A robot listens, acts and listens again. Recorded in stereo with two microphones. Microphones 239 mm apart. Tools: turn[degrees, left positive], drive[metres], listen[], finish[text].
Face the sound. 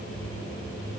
Action: listen[]
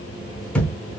Action: turn[30]
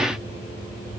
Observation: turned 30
Action: listen[]
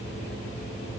Action: finish[I heard a thud, but can't make it out now. It was about 25° right or 145° left.]